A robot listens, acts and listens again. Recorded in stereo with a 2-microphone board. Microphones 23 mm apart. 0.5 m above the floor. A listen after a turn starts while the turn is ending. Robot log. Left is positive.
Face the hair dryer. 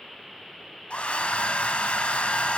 cmd yaw +90
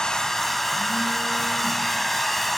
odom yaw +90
note: So it is at 10° left.
cmd yaw +10
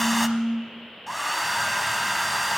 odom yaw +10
end: Found it: a hair dryer, straight ahead, 1 to 2 m away.